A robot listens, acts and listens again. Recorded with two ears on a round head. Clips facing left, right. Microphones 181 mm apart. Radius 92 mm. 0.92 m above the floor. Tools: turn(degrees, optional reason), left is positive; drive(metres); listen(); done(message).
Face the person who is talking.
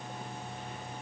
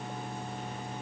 listen()
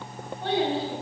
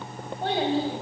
turn(degrees=-30, reason="The child speaking: about 30° right or 150° right.")
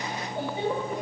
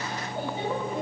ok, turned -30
turn(degrees=15, reason="So it is at 15° left.")
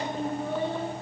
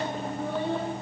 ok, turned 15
turn(degrees=10, reason="The child speaking is now 10° left.")
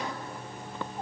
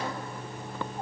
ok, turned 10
listen()
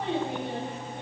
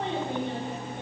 turn(degrees=10, reason="The child speaking is now 10° left.")
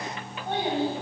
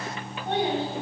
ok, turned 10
done("Found it: a child speaking, straight ahead, over 4 m away.")